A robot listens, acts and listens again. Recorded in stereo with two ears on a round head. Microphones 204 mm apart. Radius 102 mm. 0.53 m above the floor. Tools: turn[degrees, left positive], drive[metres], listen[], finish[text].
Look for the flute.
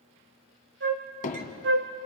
Thought: The flute: about 50° right or 130° right.
Action: turn[-50]
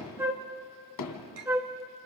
Thought: So it is at 10° right.
Action: turn[-10]
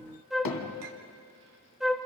Action: finish[Found it: a flute, straight ahead, 1 to 2 m away.]